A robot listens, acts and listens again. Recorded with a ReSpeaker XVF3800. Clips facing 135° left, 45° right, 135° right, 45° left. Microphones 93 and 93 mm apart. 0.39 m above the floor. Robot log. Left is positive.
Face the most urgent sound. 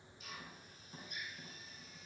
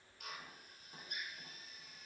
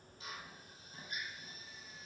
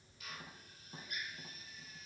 cmd idle
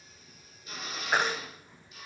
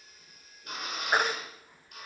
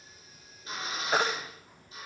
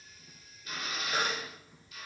note: The baby crying: 125° right.
cmd yaw -125
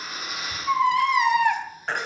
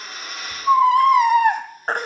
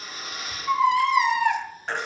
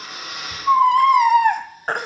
end: Found it: a baby crying, straight ahead.